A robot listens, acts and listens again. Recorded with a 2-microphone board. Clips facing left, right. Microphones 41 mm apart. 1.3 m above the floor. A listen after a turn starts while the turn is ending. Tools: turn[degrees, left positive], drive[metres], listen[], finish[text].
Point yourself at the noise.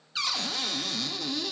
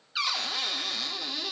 Action: turn[-30]
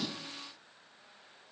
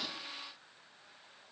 Action: listen[]
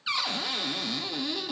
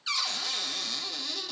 Thought: So it is at 20° left.
Action: turn[20]
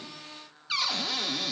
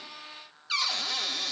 Action: finish[Found it: a cupboard door, straight ahead, under 1 m away.]